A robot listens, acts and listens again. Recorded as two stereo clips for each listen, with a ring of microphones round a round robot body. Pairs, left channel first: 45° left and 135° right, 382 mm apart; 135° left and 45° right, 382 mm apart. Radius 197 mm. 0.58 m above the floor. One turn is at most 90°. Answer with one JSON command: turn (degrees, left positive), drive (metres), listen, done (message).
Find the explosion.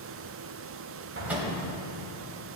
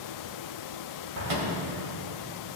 {"turn": -80}
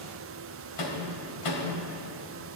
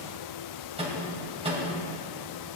{"done": "Facing where the explosion came from. I can't hear it now."}